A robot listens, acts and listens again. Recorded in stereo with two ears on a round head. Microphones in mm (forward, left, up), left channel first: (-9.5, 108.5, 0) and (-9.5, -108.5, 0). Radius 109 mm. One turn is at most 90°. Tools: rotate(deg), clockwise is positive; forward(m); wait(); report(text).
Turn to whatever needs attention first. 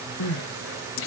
rotate(-60)
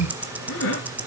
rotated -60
rotate(-55)
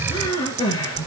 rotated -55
rotate(-15)
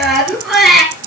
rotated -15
report("Found it: crying, straight ahead.")